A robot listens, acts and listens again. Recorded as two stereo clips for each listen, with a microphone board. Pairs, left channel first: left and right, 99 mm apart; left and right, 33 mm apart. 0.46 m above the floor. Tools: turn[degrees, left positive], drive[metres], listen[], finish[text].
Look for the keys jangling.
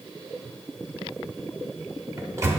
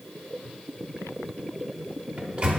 Action: listen[]
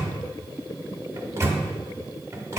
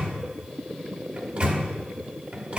Action: listen[]
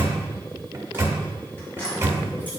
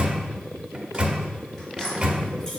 Thought: The keys jangling: about 20° left or 160° left.
Action: turn[20]
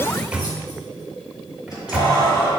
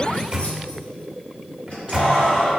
Thought: The keys jangling: about 40° left or 140° left.
Action: turn[40]
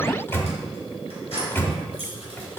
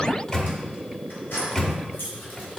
Thought: So it is at 100° left.
Action: turn[100]
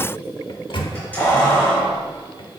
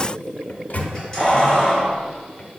Thought: The keys jangling is now 15° left.
Action: turn[15]
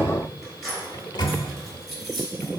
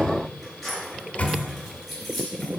Action: finish[Facing the keys jangling.]